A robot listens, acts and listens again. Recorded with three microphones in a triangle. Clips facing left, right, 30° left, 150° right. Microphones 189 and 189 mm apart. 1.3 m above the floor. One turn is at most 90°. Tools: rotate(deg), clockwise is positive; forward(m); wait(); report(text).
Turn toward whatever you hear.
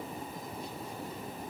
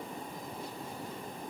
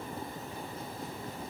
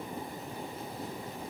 wait()
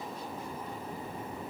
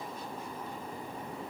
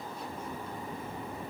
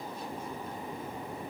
wait()
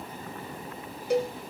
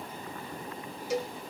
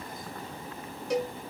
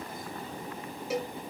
rotate(-90)
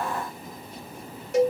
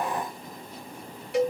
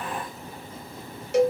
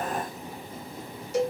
rotate(-45)
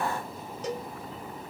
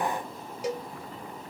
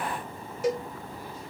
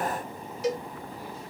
rotate(10)
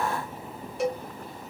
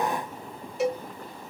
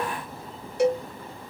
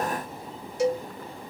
report("Found it: a cowbell, straight ahead.")